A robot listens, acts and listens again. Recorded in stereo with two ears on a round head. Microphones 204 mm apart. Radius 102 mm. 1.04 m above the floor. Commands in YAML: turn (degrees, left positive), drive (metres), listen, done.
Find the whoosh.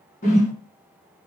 turn: 35
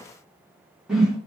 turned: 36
done: "Facing the whoosh, 1 to 2 m away."